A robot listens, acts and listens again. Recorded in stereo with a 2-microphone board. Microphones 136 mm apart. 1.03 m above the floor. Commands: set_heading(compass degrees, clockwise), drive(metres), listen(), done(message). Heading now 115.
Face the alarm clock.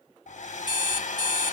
set_heading(80)
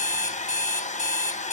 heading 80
set_heading(330)
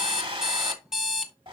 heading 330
done("Found it: an alarm clock, straight ahead.")